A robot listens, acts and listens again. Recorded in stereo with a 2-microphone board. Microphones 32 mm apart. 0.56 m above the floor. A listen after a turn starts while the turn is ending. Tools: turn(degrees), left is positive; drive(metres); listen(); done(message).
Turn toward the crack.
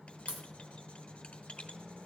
turn(degrees=-50)
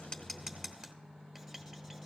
listen()
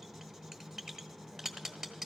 done("I heard a crack, but can't make it out now. It was about straight ahead or 80° right.")